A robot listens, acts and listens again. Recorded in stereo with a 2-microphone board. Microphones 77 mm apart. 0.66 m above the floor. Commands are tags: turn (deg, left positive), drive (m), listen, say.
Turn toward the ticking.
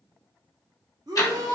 <turn deg="50"/>
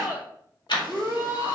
<turn deg="80"/>
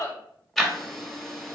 <say>Found it: ticking, straight ahead, 1 to 2 m away.</say>